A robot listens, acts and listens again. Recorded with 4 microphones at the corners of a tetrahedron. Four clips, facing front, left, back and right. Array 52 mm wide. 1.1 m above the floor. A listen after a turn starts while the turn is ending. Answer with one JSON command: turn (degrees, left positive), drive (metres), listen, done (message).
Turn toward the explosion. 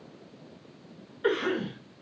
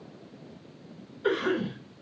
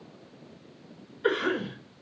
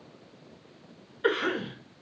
{"listen": true}
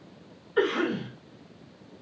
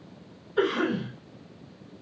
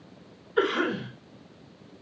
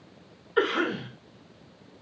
{"listen": true}
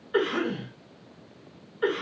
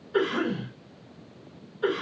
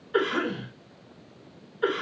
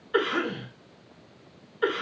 {"done": "I can't make out an explosion, only a cough."}